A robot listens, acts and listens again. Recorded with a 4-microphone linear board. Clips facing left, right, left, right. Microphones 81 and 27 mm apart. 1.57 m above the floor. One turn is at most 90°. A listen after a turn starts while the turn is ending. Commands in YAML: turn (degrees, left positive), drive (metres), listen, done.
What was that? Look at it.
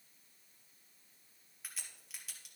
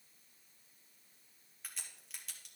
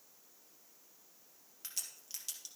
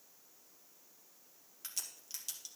turn: 30
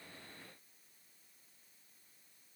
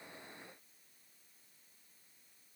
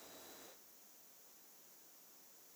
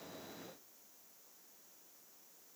listen: true
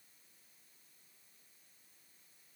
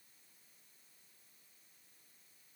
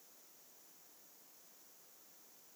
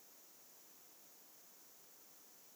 done: "I heard a crack, but can't make it out now. It was about 30° right or 150° left."